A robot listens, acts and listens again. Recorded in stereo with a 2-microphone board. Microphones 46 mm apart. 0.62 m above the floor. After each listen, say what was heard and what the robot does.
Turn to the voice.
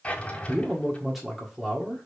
Turn 30° right.
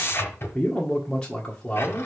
So it is at 25° left. Turn 25° left.
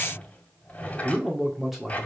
Facing the man speaking.